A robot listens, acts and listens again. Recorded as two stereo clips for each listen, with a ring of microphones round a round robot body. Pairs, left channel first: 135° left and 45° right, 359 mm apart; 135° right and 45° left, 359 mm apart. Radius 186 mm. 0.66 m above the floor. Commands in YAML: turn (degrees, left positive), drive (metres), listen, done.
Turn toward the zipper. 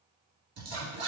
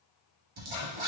turn: 15
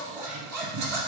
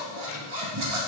done: "Facing the zipper, 1 to 2 m away."